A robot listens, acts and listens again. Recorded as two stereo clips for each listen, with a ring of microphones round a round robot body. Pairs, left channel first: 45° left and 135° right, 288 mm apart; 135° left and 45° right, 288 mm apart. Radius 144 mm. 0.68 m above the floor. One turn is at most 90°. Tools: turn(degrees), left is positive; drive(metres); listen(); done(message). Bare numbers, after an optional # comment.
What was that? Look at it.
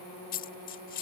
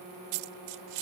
# The dropped coin: 20° right.
turn(-20)
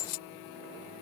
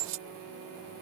done("Found it: a dropped coin, straight ahead.")